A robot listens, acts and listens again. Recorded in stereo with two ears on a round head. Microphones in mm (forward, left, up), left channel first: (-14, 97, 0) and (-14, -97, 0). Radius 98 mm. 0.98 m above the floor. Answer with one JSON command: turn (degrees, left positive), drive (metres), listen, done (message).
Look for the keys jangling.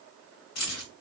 {"turn": 90}
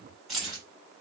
{"done": "Found it: keys jangling, straight ahead."}